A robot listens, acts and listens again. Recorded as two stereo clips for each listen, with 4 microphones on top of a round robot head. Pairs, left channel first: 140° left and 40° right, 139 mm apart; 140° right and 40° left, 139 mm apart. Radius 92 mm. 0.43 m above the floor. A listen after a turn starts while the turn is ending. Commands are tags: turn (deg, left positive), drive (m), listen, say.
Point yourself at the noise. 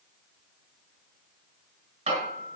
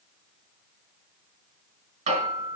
<say>Found it: hammering, straight ahead, 2 to 4 m away.</say>